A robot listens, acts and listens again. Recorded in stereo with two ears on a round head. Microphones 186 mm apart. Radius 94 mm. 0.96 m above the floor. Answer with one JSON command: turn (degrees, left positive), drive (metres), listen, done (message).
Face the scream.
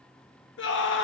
{"turn": 60}
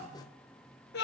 {"turn": 50}
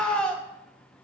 {"done": "Found it: a scream, straight ahead."}